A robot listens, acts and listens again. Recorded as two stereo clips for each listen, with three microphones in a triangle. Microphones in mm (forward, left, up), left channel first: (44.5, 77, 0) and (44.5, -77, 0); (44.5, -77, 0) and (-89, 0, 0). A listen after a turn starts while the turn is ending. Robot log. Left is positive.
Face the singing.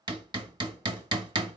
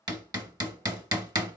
cmd idle
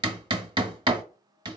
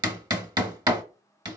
cmd idle
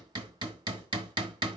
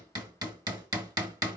end: I can't make out singing, only hammering.